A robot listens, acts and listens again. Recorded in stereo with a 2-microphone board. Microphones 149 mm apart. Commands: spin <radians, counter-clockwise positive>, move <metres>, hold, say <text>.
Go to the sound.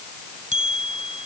spin -0.96
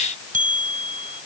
spin -1.13
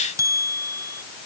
spin -0.44
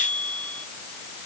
spin 0.17
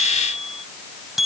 move 1.0
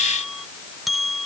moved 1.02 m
move 1.0
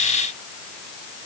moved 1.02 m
hold
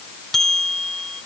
move 1.0
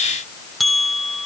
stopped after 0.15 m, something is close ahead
say Arrived at the bell, straight ahead.